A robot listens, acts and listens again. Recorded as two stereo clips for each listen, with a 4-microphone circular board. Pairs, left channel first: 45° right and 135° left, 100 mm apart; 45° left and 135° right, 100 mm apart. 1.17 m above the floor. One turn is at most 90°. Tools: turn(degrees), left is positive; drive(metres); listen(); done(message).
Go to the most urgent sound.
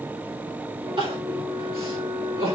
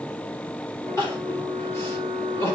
turn(degrees=90)
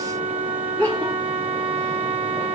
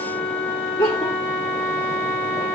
turn(degrees=25)
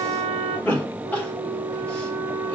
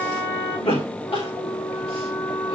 turn(degrees=30)
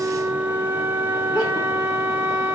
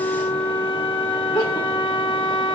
listen()
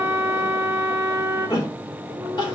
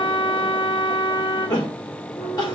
drive(metres=1.0)
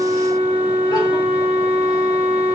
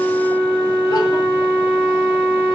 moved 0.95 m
listen()
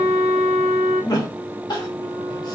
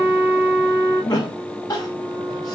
drive(metres=1.0)
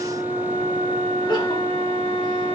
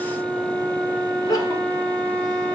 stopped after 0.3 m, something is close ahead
listen()
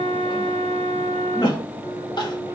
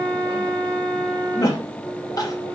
done("I am next to the crying.")